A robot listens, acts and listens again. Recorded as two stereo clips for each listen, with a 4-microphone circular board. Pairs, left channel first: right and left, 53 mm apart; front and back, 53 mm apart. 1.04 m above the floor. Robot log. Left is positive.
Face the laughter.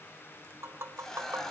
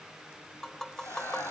note: The laughter: 15° right.
cmd yaw -15
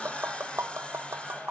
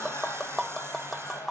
end: Facing the laughter, over 4 m away.